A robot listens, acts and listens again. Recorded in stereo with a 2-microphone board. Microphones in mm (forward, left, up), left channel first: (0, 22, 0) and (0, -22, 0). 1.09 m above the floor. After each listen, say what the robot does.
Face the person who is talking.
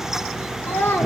Turn 65° left.
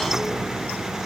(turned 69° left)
Keep listening.
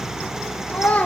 Turn 35° left.
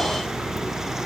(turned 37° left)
Keep listening.
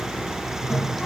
Keep listening.
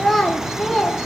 Facing the child speaking.